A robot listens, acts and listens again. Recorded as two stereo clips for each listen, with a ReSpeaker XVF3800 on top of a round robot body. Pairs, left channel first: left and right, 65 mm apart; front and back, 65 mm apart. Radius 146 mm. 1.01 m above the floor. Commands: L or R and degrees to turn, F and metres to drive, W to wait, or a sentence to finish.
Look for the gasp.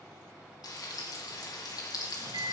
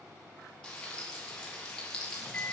W
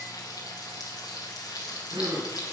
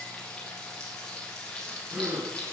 R105
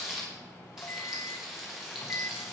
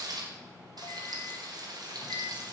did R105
Facing where the gasp came from. I can't hear it now.